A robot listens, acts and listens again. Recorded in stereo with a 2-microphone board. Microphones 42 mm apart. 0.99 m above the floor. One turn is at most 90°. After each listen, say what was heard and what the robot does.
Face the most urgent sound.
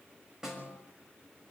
Keep listening.
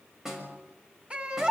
The baby crying: about 30° right or 150° right. Turn 30° right.
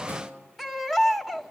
Found it: a baby crying, straight ahead, 1 to 2 m away.